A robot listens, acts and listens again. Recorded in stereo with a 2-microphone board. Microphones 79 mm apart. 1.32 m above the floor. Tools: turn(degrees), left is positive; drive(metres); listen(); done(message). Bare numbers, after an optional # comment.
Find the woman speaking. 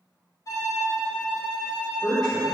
# The woman speaking: about 65° left or 115° left.
turn(65)
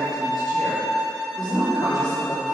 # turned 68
# So it is at 75° left.
turn(75)
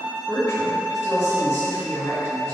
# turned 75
# The woman speaking is now 30° left.
turn(30)
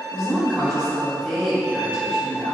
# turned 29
done("Found it: a woman speaking, straight ahead.")